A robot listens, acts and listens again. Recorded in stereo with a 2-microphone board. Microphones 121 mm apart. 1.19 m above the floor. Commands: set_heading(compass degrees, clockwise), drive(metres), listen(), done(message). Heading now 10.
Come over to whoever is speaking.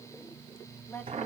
set_heading(355)
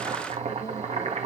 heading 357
listen()
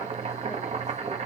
listen()
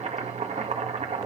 done("I heard a woman speaking, but can't make it out now. It was about 5° left or 150° left. I did not reach it.")